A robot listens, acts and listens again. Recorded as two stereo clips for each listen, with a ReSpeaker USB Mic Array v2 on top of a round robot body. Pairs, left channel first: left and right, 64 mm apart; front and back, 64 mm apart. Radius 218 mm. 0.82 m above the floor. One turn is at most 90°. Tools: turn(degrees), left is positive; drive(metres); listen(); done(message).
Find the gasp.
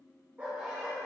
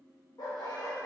listen()
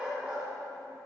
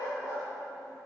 listen()
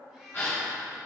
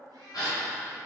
turn(degrees=30)
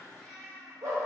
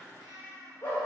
done("I heard a gasp from this way, but can't make it out now.")